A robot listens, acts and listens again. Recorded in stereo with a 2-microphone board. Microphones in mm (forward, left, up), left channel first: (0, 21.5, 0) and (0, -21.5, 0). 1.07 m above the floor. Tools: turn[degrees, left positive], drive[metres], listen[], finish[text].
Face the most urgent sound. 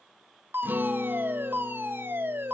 Thought: The fire alarm: about 55° right or 125° right.
Action: turn[-55]
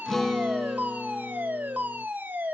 Thought: So it is at 50° right.
Action: turn[-50]
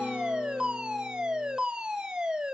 Thought: The fire alarm is now 20° right.
Action: turn[-20]
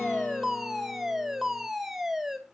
Thought: The fire alarm is now 10° right.
Action: turn[-10]
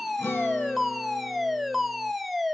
Action: finish[Facing the fire alarm.]